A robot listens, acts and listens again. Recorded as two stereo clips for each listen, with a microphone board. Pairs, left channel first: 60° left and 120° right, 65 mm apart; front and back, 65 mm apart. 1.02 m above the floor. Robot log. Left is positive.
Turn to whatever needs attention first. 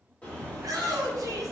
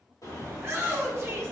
note: The shout: 130° right.
cmd yaw -130
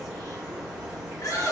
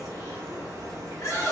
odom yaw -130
note: The shout is now 40° left.
cmd yaw +40
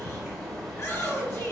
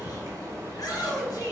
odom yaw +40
note: The shout is now 15° left.
cmd yaw +15
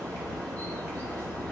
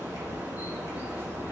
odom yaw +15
cmd idle
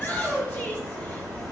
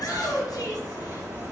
end: Found it: a shout, straight ahead.